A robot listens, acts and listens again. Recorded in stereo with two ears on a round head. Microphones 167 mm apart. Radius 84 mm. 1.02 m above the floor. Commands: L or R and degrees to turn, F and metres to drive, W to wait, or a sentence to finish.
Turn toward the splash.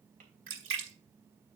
R90
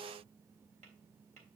I heard a splash from this way, but can't make it out now.